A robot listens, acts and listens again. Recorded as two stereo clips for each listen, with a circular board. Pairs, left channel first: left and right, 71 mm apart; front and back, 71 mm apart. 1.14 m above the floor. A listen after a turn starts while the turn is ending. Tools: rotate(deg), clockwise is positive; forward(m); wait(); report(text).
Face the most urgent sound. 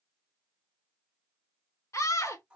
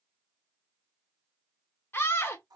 rotate(-55)
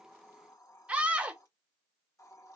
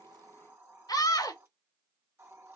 rotate(20)
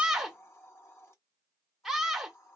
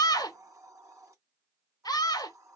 report("Found it: a scream, straight ahead.")